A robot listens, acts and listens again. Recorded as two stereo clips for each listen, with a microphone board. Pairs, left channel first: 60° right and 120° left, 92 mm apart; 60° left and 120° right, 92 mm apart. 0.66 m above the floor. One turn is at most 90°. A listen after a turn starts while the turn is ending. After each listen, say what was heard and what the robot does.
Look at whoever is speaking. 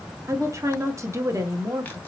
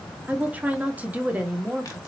The woman speaking: 170° left. Turn 90° left.
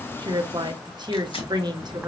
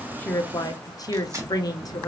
The woman speaking is now 95° left. Turn 90° left.
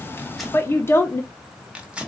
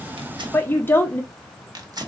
Found it: a woman speaking, straight ahead, under 1 m away.